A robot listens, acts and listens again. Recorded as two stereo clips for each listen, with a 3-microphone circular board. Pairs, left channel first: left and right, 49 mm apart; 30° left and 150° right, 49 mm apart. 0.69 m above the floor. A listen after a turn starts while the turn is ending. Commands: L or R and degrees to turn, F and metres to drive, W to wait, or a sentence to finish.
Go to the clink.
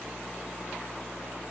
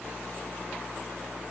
W
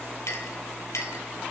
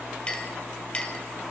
L95
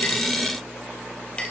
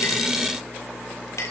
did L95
L20
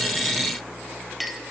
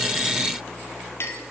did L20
F1.0
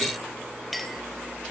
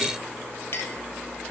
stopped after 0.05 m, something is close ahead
Something is in my way. I am facing the clink but have not reached it.